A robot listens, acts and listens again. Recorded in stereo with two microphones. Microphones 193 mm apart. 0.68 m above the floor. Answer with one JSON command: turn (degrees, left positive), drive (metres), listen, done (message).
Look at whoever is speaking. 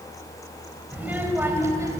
{"turn": -15}
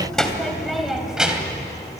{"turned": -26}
{"turn": -30}
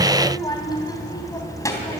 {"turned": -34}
{"turn": 15}
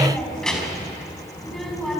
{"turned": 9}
{"done": "Facing the child speaking, over 4 m away."}